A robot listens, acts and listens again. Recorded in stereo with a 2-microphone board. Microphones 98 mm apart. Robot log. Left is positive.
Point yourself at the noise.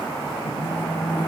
note: The phone buzzing: about 45° left or 135° left.
cmd yaw +45
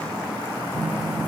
end: Facing the phone buzzing, 2 to 4 m away.